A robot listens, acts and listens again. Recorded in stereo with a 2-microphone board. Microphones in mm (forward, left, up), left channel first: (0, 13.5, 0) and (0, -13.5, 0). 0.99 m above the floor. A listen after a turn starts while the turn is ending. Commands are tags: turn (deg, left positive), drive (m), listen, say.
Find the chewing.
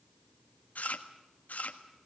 <turn deg="70"/>
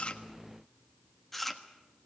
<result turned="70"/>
<say>Found it: chewing, straight ahead.</say>